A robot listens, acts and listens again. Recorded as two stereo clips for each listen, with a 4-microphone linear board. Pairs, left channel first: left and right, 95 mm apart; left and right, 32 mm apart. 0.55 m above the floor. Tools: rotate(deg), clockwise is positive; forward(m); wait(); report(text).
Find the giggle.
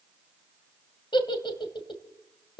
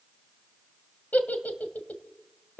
rotate(-60)
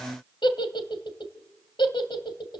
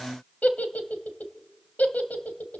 rotate(-60)
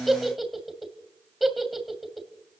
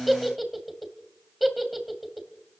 report("Facing the giggle.")